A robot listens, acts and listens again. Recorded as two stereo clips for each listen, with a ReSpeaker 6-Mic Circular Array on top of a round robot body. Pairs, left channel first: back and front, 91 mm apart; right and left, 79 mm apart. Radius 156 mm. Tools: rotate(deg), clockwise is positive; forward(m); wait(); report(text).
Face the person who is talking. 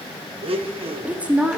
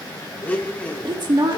rotate(-75)
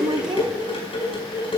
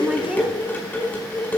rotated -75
rotate(-10)
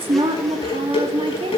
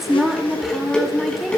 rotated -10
report("Facing the woman speaking.")